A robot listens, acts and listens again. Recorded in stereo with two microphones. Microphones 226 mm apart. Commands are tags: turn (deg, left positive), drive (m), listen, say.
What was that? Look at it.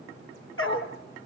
<turn deg="70"/>
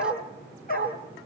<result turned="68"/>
<turn deg="40"/>
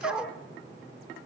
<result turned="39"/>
<say>Facing the dog barking, over 4 m away.</say>